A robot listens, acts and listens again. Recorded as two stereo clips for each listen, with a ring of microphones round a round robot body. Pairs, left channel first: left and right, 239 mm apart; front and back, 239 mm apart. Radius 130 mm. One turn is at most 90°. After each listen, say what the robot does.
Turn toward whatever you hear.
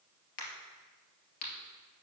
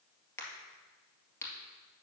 Turn 80° left.
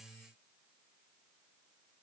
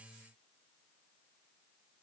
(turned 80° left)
Facing where the crack came from. I can't hear it now.